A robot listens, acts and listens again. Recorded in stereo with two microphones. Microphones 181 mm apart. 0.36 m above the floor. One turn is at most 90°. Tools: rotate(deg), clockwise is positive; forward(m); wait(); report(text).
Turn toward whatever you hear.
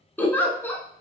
rotate(-30)
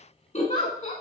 rotate(-90)
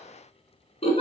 rotate(-35)
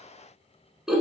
report("Facing the giggle, under 1 m away.")